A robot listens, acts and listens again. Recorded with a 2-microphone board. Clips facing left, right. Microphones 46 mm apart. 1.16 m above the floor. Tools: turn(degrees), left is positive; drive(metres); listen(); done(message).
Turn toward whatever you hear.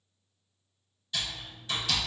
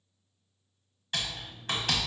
turn(degrees=-55)
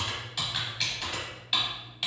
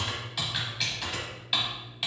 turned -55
done("Facing the typing on a keyboard.")